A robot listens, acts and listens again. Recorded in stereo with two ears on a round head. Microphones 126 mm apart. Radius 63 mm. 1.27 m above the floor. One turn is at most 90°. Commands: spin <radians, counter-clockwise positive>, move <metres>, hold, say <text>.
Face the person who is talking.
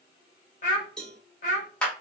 spin 1.05
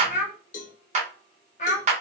spin 0.96
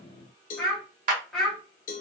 say Facing the child speaking, 1 to 2 m away.